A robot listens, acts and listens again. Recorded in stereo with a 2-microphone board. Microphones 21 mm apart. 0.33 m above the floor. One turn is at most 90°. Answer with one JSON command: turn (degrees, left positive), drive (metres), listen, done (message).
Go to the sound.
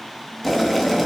{"turn": 30}
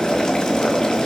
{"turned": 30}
{"turn": 90}
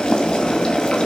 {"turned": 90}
{"turn": 45}
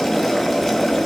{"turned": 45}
{"drive": 1.0}
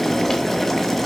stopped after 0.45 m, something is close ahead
{"turn": 10}
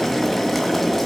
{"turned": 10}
{"done": "Something is in my way. I am facing the boiling but have not reached it."}